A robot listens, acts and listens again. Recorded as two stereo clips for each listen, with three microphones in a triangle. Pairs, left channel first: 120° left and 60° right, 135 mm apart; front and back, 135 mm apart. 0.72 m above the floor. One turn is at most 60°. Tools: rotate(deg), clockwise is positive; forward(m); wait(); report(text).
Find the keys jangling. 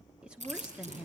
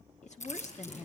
rotate(30)
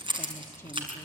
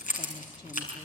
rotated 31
rotate(10)
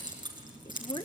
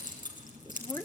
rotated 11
report("Found it: keys jangling, straight ahead, over 4 m away.")